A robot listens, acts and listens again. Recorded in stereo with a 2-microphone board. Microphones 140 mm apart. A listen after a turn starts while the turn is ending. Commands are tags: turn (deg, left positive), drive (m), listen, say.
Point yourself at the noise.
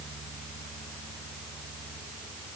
<listen/>
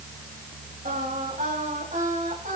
<turn deg="-90"/>
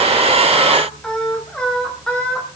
<say>Facing the singing, over 4 m away.</say>